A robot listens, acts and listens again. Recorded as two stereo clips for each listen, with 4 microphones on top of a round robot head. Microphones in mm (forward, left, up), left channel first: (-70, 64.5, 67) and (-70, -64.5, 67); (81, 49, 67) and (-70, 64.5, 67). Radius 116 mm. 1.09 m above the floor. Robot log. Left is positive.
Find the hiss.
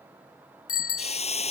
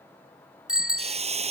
note: The hiss: 125° left.
cmd yaw +125
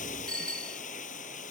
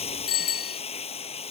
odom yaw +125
note: The hiss is now 45° left.
cmd yaw +45
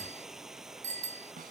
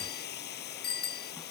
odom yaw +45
end: Facing the hiss.